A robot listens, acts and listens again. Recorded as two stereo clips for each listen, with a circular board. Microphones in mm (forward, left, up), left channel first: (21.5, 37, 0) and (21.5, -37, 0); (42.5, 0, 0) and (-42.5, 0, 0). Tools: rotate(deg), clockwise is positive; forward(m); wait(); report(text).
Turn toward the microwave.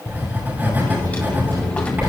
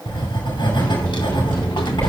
rotate(80)
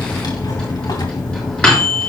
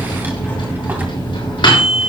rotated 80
rotate(-10)
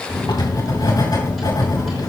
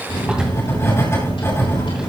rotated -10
report("Facing the microwave, over 4 m away.")